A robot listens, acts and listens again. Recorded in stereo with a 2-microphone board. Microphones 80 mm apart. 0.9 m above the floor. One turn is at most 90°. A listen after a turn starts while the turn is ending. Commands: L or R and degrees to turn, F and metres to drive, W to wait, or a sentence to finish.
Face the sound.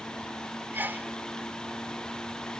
R25
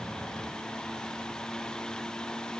W
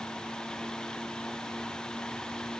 I heard a sneeze, but can't make it out now. It was about straight ahead or 130° right.